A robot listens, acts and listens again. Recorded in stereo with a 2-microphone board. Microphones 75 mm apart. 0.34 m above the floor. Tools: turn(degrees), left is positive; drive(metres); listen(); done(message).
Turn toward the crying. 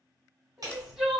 turn(degrees=-30)
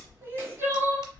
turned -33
turn(degrees=-145)
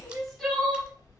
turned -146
done("Found it: crying, straight ahead, 1 to 2 m away.")